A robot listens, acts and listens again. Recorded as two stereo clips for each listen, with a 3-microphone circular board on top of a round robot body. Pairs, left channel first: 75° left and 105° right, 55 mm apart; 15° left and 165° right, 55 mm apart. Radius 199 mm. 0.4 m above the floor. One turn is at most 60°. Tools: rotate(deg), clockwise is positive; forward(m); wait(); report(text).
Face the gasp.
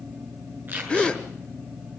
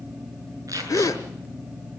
report("Facing the gasp, 1 to 2 m away.")